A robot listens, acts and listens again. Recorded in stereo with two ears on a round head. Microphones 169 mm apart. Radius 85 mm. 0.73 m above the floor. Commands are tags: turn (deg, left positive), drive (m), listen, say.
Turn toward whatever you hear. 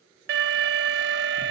<turn deg="-65"/>
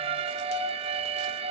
<turn deg="-35"/>
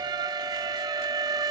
<turn deg="-25"/>
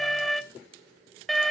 <say>Facing the alarm.</say>